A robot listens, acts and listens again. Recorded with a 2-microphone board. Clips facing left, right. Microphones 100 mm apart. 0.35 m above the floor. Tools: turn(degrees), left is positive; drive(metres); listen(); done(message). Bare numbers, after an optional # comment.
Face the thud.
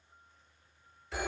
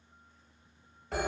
listen()
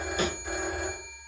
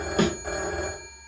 # The thud: about 70° right or 110° right.
turn(-70)
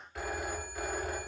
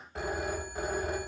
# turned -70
listen()
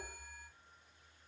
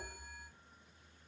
done("I heard a thud, but can't make it out now. It was about straight ahead or 40° right.")